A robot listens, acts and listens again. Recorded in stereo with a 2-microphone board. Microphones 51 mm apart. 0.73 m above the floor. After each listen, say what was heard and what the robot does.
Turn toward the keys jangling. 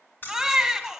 The keys jangling: about 45° left or 135° left. Turn 45° left.
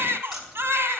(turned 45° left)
Facing the keys jangling.